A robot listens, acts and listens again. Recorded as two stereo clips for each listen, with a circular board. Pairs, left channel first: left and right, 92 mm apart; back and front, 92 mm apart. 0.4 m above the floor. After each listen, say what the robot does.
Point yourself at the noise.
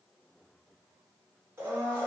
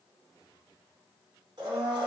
Turn 30° right.
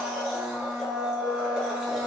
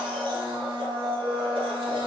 Found it: a blender, straight ahead.